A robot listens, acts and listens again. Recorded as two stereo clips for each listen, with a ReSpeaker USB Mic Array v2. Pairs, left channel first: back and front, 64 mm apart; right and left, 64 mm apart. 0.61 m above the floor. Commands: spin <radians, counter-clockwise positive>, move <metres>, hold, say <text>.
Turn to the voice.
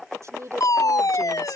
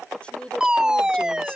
spin -0.35
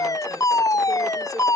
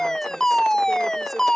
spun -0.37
hold
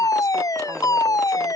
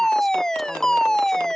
hold
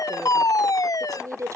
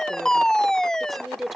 say Facing the woman speaking.